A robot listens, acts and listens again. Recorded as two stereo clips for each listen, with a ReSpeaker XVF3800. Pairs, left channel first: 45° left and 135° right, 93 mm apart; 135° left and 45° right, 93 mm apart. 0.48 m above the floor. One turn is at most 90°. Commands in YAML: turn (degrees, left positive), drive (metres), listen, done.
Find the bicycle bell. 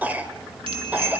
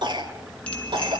turn: -90
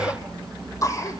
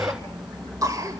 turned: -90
turn: -60
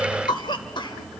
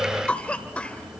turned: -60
listen: true
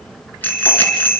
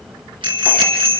turn: -25
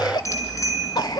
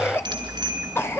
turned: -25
turn: -10
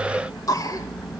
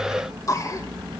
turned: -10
done: "Found it: a bicycle bell, straight ahead, over 4 m away."